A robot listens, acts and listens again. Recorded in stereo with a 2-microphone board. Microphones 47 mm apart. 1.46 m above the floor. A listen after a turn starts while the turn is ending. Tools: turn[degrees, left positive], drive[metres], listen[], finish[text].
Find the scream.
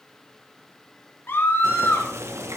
Thought: The scream: about 55° left or 125° left.
Action: turn[55]
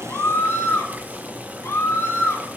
Thought: So it is at 70° left.
Action: turn[70]
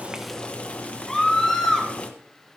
Thought: The scream is now 10° left.
Action: turn[10]
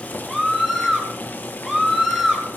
Action: finish[Found it: a scream, straight ahead, 2 to 4 m away.]